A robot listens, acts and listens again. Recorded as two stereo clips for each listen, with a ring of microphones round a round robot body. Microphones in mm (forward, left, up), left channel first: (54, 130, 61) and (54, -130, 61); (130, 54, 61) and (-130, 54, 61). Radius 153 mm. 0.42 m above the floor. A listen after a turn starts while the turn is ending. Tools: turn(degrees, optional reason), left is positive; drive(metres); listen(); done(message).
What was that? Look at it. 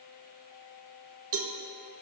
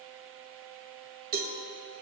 turn(degrees=-125, reason="The cowbell: 125° right.")
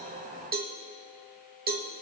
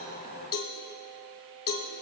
turn(degrees=-35, reason="The cowbell is now 35° right.")
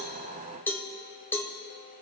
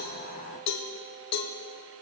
turn(degrees=10, reason="The cowbell is now 10° left.")
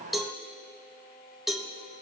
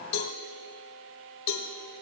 done("Found it: a cowbell, straight ahead, 1 to 2 m away.")